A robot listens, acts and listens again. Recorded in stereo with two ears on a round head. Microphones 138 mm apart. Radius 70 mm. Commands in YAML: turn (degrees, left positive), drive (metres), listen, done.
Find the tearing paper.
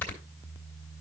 listen: true
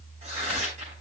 turn: -45
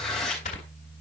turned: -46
done: "Facing the tearing paper, over 4 m away."